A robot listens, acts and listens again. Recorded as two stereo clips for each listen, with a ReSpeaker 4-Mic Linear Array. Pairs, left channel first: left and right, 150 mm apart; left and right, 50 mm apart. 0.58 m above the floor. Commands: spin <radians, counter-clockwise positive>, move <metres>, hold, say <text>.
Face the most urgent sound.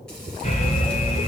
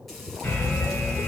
spin 0.87
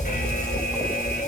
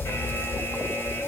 spin 1.48
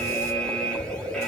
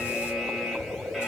say Facing the alarm, 2 to 4 m away.